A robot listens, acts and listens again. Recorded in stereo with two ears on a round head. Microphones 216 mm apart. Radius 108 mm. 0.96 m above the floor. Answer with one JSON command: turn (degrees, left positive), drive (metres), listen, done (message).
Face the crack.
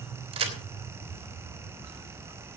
{"turn": -25}
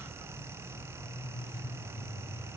{"listen": true}
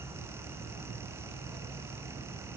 {"done": "I heard a crack, but can't make it out now. It was about straight ahead or 130° right."}